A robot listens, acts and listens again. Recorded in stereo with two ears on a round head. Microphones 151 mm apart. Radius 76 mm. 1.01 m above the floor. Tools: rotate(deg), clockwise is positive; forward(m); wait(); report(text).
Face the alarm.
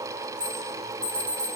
rotate(40)
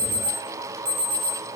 rotate(100)
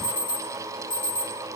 rotate(-30)
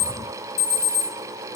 rotate(-20)
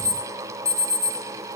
report("Found it: an alarm, straight ahead.")